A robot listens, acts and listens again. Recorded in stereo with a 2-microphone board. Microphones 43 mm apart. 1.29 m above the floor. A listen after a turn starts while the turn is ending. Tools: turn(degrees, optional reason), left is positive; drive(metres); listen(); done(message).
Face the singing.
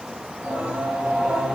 turn(degrees=-30, reason="The singing: about 30° right or 150° right.")
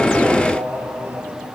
turn(degrees=-115, reason="So it is at 115° right.")
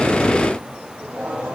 turn(degrees=-40, reason="The singing is now 40° right.")
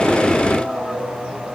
turn(degrees=10, reason="The singing is now 10° left.")
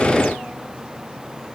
listen()
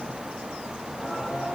done("Facing the singing, over 4 m away.")